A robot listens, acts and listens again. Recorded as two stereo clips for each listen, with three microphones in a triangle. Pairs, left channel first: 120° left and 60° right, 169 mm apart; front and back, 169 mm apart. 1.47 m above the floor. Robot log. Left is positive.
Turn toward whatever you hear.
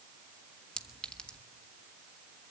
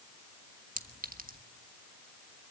note: The clink: 155° right.
cmd yaw -155
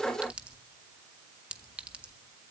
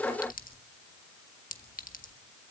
note: The clink is now 25° left.
cmd yaw +25
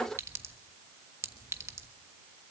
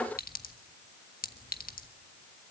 note: The clink is now 15° left.
cmd yaw +15
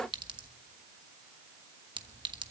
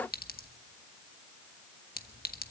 end: Facing the clink.